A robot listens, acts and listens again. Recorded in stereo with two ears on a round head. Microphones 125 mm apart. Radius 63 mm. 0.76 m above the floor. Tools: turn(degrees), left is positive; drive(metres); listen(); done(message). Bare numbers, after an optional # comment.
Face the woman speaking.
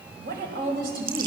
# The woman speaking: about 75° right or 105° right.
turn(-75)
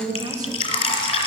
# So it is at 30° right.
turn(-30)
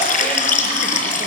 listen()
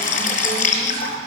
listen()
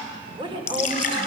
# The woman speaking is now 35° right.
turn(-35)
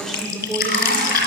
done("Facing the woman speaking.")